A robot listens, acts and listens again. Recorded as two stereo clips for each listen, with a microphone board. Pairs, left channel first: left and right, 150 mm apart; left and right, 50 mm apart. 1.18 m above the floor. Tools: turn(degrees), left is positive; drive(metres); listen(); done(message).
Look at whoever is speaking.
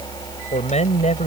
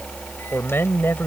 turn(degrees=50)
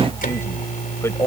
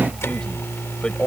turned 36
turn(degrees=20)
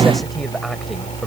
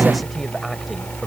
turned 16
listen()
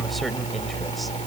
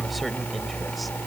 listen()
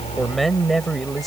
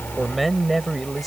done("Facing the man speaking.")